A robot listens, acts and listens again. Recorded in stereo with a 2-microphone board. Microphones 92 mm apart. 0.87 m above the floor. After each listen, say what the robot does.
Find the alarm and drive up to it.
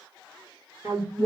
Turn 40° right.
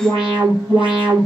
Turn 100° right.
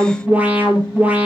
Turn 20° right.
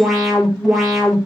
Drive 1.0 m forward.
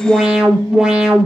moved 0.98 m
Turn 10° right.
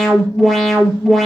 Drive 1.0 m forward.
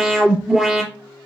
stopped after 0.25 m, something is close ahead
Something is in my way. I am facing the alarm but have not reached it.